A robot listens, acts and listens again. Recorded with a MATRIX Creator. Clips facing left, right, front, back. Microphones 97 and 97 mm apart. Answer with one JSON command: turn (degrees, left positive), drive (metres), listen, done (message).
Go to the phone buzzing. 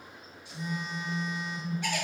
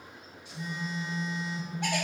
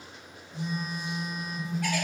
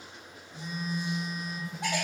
{"turn": 15}
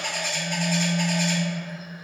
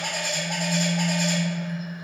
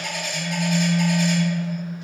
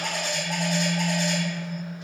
{"drive": 1.0}
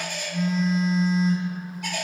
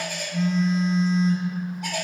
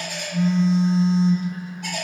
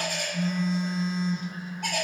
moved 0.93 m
{"drive": 1.0}
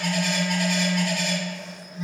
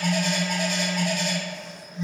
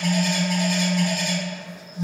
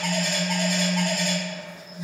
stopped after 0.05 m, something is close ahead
{"done": "I am next to the phone buzzing."}